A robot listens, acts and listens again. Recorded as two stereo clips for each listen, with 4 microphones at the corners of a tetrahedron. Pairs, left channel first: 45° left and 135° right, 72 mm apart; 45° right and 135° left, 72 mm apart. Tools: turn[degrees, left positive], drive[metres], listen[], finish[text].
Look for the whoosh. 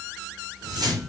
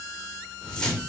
Thought: The whoosh: 125° right.
Action: turn[-125]
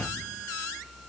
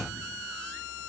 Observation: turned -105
Thought: The whoosh is now 20° right.
Action: turn[-20]
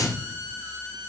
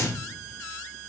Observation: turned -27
Action: finish[Facing the whoosh, 1 to 2 m away.]